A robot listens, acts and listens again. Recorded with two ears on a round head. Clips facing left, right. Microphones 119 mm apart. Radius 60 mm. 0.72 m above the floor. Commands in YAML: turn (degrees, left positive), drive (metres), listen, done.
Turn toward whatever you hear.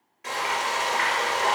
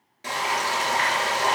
turn: -35
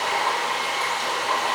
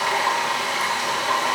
turn: -110
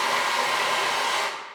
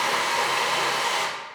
done: "Facing the frying."